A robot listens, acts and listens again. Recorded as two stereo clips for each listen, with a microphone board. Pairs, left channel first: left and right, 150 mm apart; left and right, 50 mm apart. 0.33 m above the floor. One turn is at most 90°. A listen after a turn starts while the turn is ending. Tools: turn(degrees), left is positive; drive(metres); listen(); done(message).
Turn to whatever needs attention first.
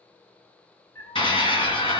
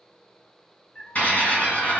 turn(degrees=35)
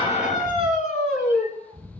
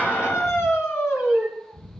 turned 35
turn(degrees=90)
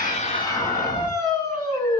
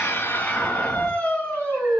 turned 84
turn(degrees=25)
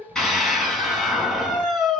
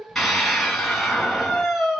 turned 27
done("Facing the scream.")